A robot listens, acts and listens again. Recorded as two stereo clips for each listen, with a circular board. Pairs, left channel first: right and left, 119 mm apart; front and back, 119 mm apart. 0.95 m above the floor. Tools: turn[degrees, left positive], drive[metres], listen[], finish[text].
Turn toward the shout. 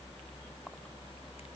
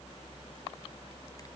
Action: listen[]
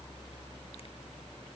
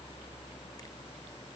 Action: listen[]
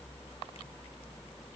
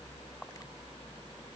Action: finish[I can't make out a shout to turn to.]